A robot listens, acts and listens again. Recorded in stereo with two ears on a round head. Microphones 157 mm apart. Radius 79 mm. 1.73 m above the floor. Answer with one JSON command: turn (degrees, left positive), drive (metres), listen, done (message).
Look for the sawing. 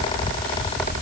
{"listen": true}
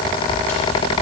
{"listen": true}
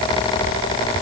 {"done": "I can't make out sawing."}